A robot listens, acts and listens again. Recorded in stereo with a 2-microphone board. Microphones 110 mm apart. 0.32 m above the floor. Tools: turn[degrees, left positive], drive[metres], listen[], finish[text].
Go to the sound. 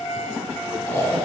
Thought: The snoring: about 25° left or 155° left.
Action: turn[25]
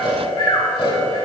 Thought: So it is at 125° left.
Action: turn[125]
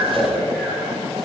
Action: drive[1.0]
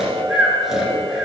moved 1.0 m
Action: drive[1.0]
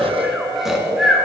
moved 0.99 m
Action: drive[1.0]
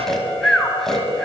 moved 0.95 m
Action: drive[1.0]
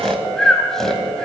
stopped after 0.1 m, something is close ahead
Action: finish[Arrived at the snoring, straight ahead.]